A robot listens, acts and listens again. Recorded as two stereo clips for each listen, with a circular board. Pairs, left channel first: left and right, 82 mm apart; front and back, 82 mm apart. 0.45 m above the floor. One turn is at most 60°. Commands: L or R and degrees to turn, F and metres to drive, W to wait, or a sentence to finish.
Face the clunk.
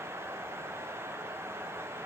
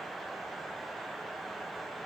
W
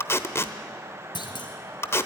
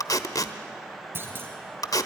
L60
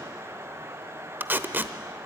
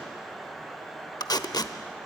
L55
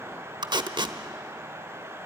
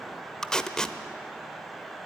Facing where the clunk came from. I can't hear it now.